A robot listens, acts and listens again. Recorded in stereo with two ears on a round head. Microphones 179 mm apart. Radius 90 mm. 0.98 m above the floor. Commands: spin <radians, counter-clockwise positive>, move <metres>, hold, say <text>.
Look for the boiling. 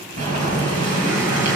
spin -0.70
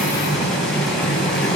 say Found it: boiling, straight ahead, over 4 m away.